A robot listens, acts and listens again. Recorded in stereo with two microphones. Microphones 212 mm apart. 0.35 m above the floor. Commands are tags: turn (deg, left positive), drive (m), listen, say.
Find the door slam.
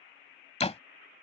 <turn deg="30"/>
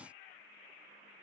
<listen/>
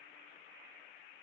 <say>I heard a door slam, but can't make it out now. It was about straight ahead or 120° left.</say>